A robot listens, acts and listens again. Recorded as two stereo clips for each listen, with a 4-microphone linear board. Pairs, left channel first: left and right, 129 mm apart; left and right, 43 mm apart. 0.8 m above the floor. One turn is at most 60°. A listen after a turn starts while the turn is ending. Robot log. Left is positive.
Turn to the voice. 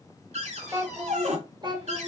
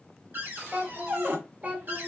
note: The child speaking: about 40° right or 140° right.
cmd yaw -40
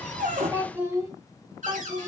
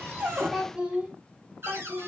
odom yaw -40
note: So it is at 30° right.
cmd yaw -30
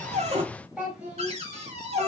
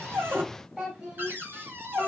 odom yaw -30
note: The child speaking is now 10° right.
cmd yaw -10
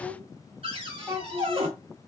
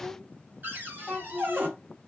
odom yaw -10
note: The child speaking is now 15° right.
cmd yaw -15
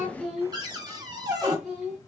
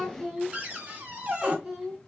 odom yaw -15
end: Facing the child speaking, 2 to 4 m away.